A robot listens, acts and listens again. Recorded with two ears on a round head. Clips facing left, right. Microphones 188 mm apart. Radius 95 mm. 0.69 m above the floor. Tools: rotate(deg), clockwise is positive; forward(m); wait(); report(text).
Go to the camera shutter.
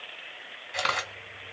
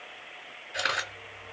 rotate(-90)
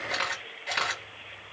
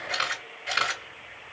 rotate(10)
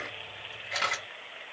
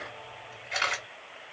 forward(1.0)
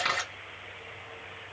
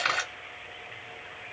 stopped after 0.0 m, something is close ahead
report("Blocked. The camera shutter is further on, straight ahead.")